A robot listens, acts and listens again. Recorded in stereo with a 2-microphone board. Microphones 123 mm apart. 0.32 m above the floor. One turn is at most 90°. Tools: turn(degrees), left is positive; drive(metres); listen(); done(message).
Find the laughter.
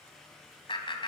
turn(degrees=45)
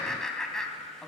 done("Facing the laughter.")